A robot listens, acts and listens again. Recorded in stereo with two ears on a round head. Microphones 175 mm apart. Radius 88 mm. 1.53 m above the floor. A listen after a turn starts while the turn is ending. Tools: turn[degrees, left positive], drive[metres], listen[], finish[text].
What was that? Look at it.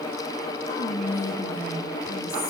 Thought: The whispering: about 55° left or 125° left.
Action: turn[55]
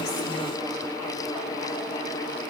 Action: listen[]
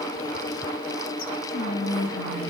Thought: So it is at 70° left.
Action: turn[70]
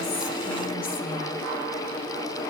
Action: listen[]
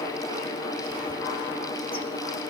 Action: listen[]
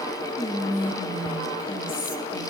Thought: The whispering is now 25° left.
Action: turn[25]
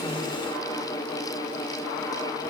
Action: listen[]
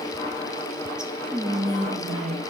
Action: finish[Facing the whispering.]